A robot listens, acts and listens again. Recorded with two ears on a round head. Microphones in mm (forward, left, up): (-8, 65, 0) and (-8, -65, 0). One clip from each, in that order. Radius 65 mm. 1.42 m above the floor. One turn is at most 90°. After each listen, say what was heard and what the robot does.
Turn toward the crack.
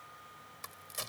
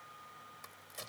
The crack: about 25° left or 155° left. Turn 25° left.
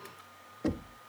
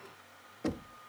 Keep listening.
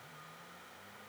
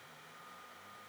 I heard a crack, but can't make it out now. It was about straight ahead or 130° left.